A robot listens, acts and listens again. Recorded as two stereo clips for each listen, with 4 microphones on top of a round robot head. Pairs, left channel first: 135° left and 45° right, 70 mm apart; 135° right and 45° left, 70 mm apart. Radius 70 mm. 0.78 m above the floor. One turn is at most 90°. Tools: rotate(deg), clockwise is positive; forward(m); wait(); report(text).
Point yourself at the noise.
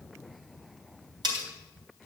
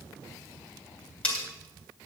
rotate(60)
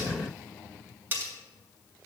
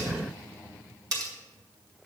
rotate(-15)
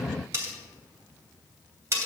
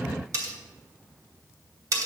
report("Facing the cutlery clinking.")